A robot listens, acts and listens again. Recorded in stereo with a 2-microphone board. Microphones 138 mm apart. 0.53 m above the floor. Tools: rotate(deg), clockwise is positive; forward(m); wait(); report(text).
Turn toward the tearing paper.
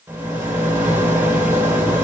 wait()
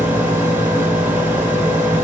wait()
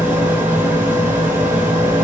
report("I can't make out tearing paper, only a rattle.")